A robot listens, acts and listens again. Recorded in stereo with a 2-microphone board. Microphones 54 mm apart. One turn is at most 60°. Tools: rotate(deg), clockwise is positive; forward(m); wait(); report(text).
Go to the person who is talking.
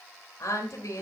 rotate(-60)
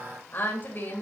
rotate(-35)
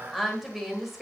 forward(1.0)
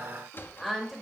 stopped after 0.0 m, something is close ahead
report("Blocked. The woman speaking is further on, straight ahead.")